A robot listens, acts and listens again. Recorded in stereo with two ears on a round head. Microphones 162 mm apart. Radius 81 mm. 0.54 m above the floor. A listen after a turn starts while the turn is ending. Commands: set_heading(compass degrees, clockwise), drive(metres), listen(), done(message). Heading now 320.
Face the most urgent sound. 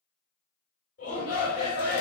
set_heading(275)
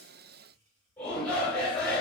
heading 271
done("Facing the shout.")